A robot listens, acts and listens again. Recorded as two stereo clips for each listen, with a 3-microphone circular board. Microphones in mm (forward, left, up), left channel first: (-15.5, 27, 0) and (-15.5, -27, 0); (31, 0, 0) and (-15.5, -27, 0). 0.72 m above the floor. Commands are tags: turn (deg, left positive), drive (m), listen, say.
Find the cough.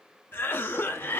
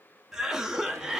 <turn deg="130"/>
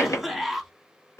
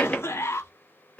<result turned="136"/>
<say>Found it: a cough, straight ahead, under 1 m away.</say>